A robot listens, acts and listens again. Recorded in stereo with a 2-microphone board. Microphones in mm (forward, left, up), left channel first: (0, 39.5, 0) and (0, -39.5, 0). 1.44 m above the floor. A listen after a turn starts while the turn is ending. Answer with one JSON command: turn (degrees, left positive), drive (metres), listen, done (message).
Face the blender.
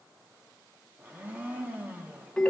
{"turn": -20}
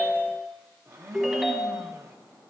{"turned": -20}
{"turn": -135}
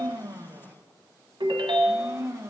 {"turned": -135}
{"turn": -45}
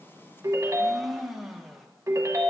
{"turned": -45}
{"done": "Facing the blender, under 1 m away."}